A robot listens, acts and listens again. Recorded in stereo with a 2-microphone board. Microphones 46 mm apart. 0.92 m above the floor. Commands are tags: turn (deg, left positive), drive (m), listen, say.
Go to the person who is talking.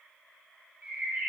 <listen/>
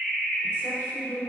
<turn deg="65"/>
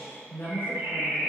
<turn deg="50"/>
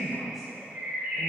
<drive m="1.0"/>
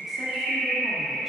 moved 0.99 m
<listen/>
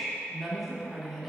<drive m="1.0"/>
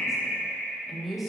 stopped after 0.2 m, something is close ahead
<say>Arrived at the woman speaking, straight ahead.</say>